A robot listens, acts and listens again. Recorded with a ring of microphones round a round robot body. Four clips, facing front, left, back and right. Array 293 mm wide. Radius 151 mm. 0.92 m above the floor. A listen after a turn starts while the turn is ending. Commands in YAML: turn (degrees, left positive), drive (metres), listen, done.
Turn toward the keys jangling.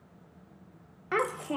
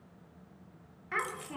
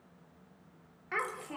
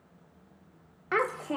turn: 60
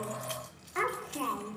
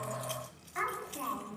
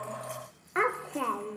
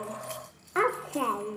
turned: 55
done: "Found it: keys jangling, straight ahead."